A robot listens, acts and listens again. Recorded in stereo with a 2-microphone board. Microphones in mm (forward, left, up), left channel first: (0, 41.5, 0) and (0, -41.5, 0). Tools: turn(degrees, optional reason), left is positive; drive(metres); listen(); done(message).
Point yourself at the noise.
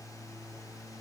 listen()
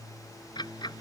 turn(degrees=60, reason="The ticking: about 60° left or 120° left.")
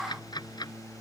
turn(degrees=60, reason="So it is at 60° left.")
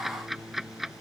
done("Facing the ticking.")